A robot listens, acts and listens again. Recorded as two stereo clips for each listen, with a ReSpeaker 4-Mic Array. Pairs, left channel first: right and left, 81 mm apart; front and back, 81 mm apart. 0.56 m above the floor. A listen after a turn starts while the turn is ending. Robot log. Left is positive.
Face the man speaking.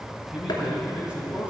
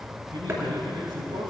note: The man speaking: 160° left.
cmd yaw +160
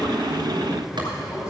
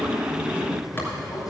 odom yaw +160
note: The man speaking is now 35° right.
cmd yaw -35
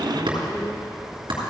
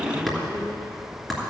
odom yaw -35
cmd idle
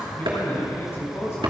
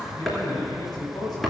note: The man speaking is now 35° right.
cmd yaw -35
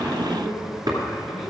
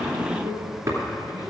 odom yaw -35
end: Found it: a man speaking, straight ahead.